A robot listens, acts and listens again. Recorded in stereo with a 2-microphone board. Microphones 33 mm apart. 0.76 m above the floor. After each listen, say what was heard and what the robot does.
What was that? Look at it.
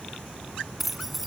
Turn 30° right.
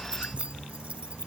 Keep listening.
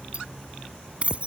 So it is at 145° right. Turn 145° right.
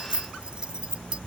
The keys jangling is now 25° right. Turn 25° right.
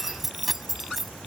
Found it: keys jangling, straight ahead.